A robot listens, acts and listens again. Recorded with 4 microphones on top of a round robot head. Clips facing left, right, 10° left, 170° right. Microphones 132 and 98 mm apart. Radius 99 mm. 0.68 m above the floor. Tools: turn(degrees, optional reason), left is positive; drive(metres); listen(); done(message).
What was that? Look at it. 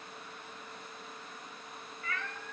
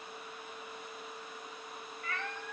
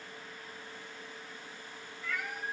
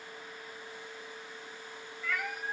turn(degrees=-155, reason="The cat meowing: 155° right.")
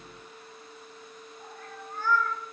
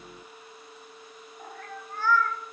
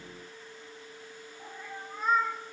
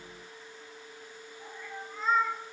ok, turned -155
turn(degrees=-70, reason="The cat meowing is now 70° right.")
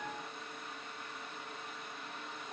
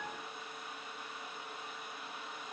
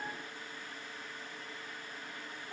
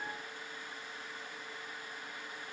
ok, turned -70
listen()
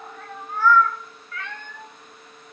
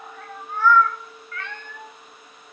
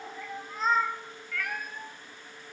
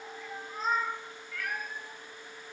done("Found it: a cat meowing, straight ahead.")